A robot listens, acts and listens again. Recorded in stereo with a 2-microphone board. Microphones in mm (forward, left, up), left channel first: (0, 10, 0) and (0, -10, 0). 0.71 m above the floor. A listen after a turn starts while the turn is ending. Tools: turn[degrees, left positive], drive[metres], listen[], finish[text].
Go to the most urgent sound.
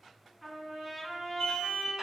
Thought: The alarm: about 60° left or 120° left.
Action: turn[60]
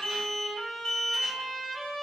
Thought: So it is at 50° left.
Action: turn[50]
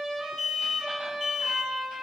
Thought: The alarm is now 10° left.
Action: turn[10]
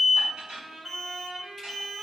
Action: drive[1.0]
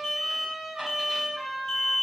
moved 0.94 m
Action: drive[1.0]
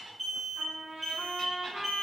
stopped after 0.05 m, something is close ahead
Action: finish[I am next to the alarm.]